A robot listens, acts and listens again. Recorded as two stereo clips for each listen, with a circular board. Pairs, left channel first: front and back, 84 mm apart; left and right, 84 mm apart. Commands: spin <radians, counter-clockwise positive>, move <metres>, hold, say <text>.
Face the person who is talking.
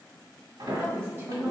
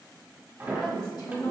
spin 1.92
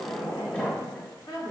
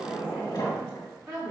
spin -0.61
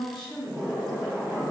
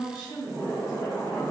spin -0.17
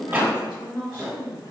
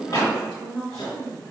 say Found it: a woman speaking, straight ahead.